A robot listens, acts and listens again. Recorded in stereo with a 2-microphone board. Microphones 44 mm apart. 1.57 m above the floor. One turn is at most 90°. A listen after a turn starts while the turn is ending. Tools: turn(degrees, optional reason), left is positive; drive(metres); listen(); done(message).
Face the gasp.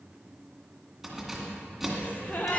turn(degrees=40, reason="The gasp: about 40° left or 140° left.")
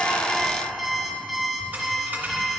listen()
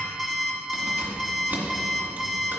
done("I heard a gasp, but can't make it out now. It was about straight ahead or 100° left.")